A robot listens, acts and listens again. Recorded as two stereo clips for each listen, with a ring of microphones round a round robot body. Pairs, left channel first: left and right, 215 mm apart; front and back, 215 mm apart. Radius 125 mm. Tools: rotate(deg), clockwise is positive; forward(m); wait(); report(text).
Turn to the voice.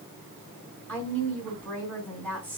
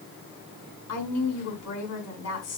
report("Found it: a woman speaking, straight ahead, over 4 m away.")